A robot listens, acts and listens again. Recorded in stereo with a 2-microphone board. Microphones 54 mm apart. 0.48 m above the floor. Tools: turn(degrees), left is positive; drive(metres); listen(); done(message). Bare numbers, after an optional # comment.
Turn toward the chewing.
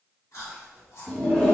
# The chewing: about 70° left or 110° left.
turn(70)
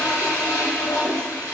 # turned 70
listen()
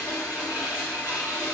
listen()
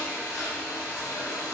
# So it is at 20° left.
turn(20)
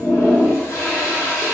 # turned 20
listen()
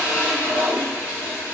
listen()
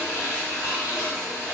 done("Facing where the chewing came from. I can't hear it now.")